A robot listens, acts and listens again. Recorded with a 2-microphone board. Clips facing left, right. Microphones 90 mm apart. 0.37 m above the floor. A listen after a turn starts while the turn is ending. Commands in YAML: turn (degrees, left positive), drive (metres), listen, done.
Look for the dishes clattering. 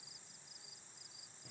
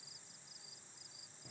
listen: true
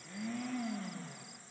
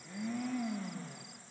listen: true
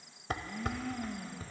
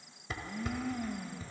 turn: 55
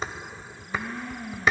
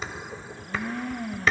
turn: 25
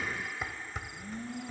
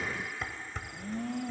turn: 10
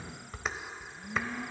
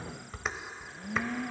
done: "Facing the dishes clattering."